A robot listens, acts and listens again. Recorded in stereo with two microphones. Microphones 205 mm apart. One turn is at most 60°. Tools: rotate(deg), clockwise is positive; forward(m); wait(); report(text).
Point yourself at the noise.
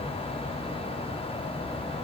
wait()
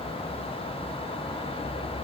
wait()
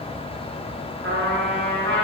rotate(60)
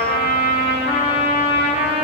rotate(30)
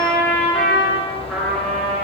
report("Facing the trumpet, 1 to 2 m away.")